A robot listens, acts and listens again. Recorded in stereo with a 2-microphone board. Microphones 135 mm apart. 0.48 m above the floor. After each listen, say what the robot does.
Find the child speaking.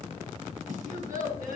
Turn 90° right.
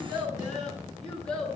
Found it: a child speaking, straight ahead, over 4 m away.